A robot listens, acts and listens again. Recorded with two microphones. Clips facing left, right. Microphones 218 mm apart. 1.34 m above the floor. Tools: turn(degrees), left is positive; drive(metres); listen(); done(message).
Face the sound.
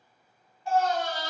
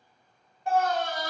turn(degrees=-55)
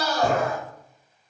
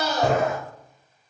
turn(degrees=-25)
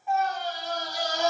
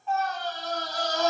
turn(degrees=15)
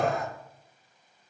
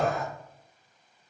done("Facing the scream, under 1 m away.")